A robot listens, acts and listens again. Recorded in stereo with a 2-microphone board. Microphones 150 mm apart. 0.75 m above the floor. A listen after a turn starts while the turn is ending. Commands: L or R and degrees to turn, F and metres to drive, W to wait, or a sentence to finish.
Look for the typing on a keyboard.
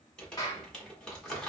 W
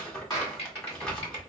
L45
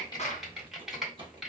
Facing the typing on a keyboard, 1 to 2 m away.